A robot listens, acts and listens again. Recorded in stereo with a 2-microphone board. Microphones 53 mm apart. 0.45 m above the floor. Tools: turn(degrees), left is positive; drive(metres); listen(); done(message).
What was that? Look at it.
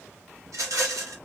turn(degrees=-90)
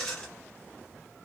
turn(degrees=10)
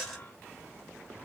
done("Facing the rattle.")